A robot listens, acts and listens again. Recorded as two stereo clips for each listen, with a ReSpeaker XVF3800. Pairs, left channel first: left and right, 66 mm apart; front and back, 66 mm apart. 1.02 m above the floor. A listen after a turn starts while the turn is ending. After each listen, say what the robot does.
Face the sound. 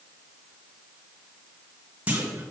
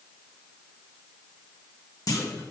Turn 25° right.
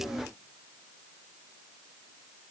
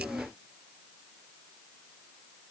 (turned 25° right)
Facing where the clunk came from. I can't hear it now.